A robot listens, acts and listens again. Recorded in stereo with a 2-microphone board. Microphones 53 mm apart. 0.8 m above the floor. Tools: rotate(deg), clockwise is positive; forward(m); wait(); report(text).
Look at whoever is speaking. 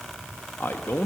rotate(-45)
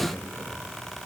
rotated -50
rotate(-75)
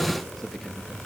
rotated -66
report("Found it: a man speaking, straight ahead, under 1 m away.")